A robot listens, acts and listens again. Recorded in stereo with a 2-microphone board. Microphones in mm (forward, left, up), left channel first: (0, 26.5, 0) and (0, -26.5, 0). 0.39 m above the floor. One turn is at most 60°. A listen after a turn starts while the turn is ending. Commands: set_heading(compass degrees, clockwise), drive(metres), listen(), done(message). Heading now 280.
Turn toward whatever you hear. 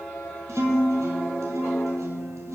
set_heading(340)
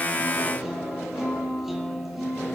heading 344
done("Found it: a guitar, straight ahead.")